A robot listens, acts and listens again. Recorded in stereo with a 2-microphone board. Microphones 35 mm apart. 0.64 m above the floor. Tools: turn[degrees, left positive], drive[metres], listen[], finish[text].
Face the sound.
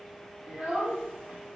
Thought: The child speaking: about 30° right or 150° right.
Action: turn[-30]
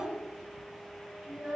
Thought: So it is at 115° right.
Action: turn[-115]
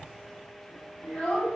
Thought: The child speaking is now 30° left.
Action: turn[30]
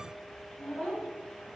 Action: finish[Found it: a child speaking, straight ahead.]